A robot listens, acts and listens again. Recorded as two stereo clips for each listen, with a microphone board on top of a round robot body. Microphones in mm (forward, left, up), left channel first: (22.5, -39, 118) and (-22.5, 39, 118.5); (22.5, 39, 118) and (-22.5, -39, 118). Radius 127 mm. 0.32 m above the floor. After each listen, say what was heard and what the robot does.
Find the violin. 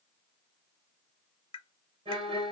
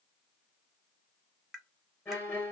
The violin: 125° left. Turn 125° left.
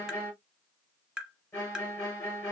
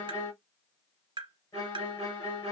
Facing the violin.